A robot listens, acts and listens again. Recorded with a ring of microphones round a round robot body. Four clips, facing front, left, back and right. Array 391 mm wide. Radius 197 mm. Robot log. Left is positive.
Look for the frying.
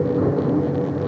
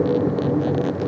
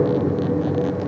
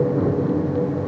cmd idle
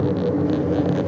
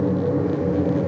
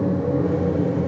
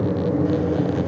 cmd idle
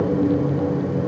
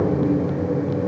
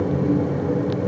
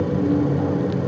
end: I can't make out frying.